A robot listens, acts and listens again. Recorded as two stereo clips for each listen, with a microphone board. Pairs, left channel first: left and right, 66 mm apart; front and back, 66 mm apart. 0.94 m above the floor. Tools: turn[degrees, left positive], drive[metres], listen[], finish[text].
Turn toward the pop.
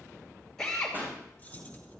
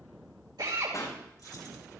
Thought: The pop: 30° right.
Action: turn[-30]
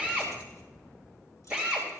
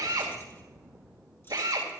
Action: finish[Facing where the pop came from. I can't hear it now.]